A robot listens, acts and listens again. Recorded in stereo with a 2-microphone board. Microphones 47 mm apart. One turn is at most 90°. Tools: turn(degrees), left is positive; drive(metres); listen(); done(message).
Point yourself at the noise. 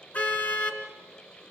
turn(degrees=30)
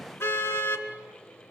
turn(degrees=90)
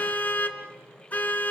turn(degrees=35)
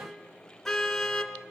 turn(degrees=10)
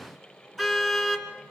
done("Found it: a car horn, straight ahead, 2 to 4 m away.")